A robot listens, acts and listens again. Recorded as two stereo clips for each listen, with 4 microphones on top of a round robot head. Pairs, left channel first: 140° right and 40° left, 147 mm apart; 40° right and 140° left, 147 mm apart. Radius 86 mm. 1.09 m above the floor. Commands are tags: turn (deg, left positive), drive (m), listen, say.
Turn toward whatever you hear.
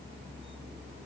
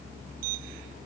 <listen/>
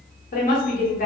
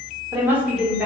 <turn deg="-135"/>
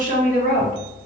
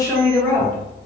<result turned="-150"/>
<turn deg="35"/>
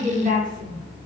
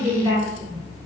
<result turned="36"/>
<turn deg="20"/>
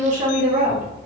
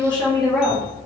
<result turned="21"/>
<turn deg="25"/>
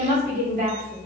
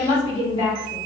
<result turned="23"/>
<turn deg="10"/>
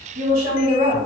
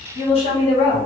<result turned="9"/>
<say>Facing the woman speaking, 1 to 2 m away.</say>